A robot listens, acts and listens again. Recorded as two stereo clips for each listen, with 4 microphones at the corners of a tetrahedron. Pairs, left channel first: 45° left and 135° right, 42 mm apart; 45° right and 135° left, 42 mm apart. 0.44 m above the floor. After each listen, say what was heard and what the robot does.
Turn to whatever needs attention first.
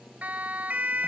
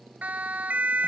The siren: straight behind. Turn 180° left.
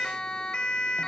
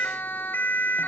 The siren is now 20° right. Turn 20° right.
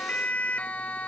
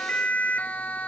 Facing the siren.